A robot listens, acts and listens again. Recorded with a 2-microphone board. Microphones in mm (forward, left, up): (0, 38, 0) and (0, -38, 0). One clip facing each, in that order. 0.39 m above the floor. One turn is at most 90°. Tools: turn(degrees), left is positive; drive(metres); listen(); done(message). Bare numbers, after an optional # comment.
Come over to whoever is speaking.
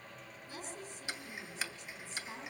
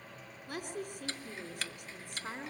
# The woman speaking: about 60° right or 120° right.
turn(-60)
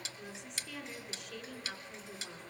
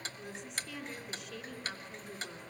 drive(1.0)
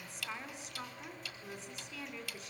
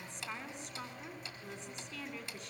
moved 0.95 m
drive(1.0)
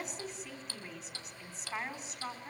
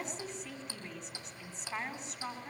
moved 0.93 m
drive(1.0)
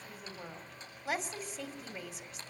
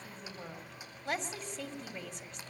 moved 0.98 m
drive(1.0)
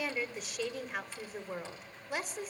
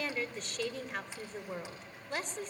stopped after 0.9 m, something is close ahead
# The woman speaking is now 10° left.
turn(10)
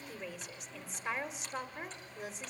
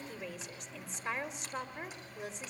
done("I am next to the woman speaking.")